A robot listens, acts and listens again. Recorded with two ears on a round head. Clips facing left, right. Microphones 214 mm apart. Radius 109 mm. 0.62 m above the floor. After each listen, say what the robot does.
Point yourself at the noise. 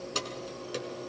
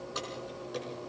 Turn 35° left.
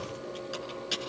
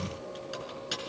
Facing the keys jangling.